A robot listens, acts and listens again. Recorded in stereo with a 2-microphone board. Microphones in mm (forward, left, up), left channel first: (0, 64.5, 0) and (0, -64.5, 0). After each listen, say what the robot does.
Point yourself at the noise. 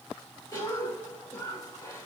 Turn 30° left.
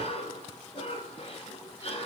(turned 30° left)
Turn 120° left.
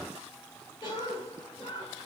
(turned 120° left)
Turn 35° left.
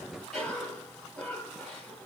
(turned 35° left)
Found it: a cough, straight ahead, 2 to 4 m away.